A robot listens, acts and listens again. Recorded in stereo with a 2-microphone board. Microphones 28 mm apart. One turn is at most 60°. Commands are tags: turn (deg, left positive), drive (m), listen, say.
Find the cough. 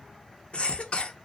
<turn deg="45"/>
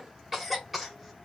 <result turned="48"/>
<say>Facing the cough.</say>